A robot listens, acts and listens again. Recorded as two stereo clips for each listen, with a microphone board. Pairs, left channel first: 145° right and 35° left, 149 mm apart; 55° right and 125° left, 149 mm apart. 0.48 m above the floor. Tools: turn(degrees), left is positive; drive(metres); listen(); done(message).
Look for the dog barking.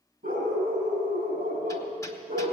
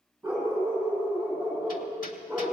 turn(degrees=40)
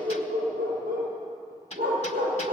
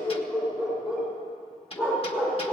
done("Facing the dog barking.")